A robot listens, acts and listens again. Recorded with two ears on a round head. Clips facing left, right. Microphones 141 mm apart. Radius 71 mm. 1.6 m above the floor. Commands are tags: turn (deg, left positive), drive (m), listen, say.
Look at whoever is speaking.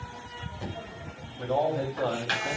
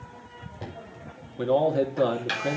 <turn deg="-70"/>
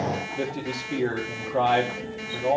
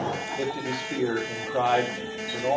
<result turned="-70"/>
<say>Found it: a man speaking, straight ahead, 2 to 4 m away.</say>